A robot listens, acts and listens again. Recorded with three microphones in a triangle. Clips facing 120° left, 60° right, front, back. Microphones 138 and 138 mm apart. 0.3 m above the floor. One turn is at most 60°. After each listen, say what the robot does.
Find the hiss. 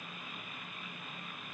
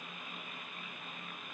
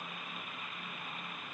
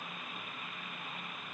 Keep listening.
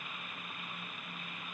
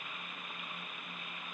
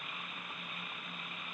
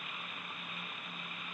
Keep listening.
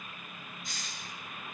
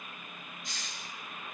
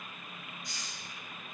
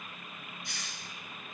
Turn 60° left.
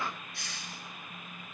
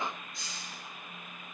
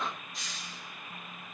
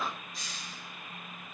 Turn 60° left.
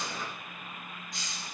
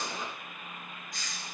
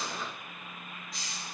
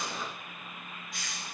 Turn 55° left.
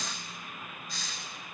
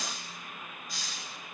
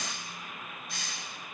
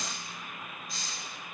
Turn 20° left.
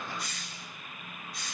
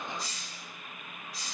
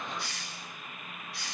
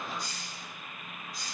Found it: a hiss, straight ahead.